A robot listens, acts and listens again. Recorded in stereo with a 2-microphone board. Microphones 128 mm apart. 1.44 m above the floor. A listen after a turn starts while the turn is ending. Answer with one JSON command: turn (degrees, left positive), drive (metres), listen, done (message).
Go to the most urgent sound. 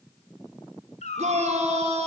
{"turn": -60}
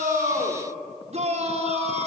{"turn": -60}
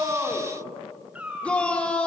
{"turn": 10}
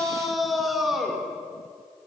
{"drive": 1.0}
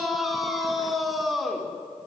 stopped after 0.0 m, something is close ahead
{"done": "Blocked. The shout is further on, straight ahead."}